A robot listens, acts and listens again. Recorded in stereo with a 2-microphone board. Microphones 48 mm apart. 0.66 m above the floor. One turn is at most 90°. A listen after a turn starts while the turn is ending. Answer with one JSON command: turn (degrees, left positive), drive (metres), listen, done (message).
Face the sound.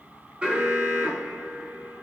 {"turn": -20}
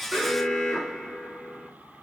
{"done": "Found it: an alarm, straight ahead."}